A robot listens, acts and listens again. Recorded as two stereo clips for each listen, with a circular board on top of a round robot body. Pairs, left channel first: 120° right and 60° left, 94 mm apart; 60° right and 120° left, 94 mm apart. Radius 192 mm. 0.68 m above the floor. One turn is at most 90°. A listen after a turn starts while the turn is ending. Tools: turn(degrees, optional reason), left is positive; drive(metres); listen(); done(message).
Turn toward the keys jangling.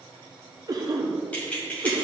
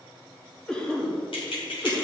turn(degrees=-45, reason="The keys jangling: 45° right.")
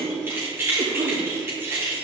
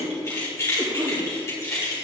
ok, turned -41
done("Facing the keys jangling.")